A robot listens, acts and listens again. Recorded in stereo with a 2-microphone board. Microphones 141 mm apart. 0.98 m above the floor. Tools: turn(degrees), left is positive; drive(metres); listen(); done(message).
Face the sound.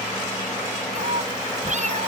turn(degrees=-55)
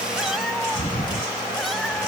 done("Facing the cat meowing.")